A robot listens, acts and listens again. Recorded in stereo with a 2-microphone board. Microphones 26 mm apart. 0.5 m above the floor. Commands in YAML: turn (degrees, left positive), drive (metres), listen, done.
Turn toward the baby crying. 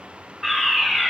listen: true
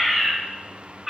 listen: true
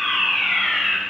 done: "I can't make out a baby crying to turn to."